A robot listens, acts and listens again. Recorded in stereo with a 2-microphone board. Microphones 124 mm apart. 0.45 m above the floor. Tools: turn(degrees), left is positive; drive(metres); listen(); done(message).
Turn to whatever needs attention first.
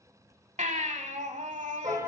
turn(degrees=-90)
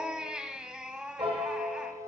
turn(degrees=-10)
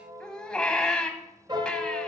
done("Found it: a baby crying, straight ahead.")